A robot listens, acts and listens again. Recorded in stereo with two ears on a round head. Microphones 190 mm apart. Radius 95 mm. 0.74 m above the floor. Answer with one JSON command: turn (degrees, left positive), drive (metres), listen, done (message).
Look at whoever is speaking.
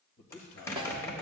{"turn": 45}
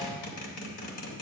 {"listen": true}
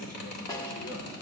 {"listen": true}
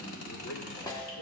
{"done": "I heard a man speaking, but can't make it out now. It was about straight ahead or 90° left."}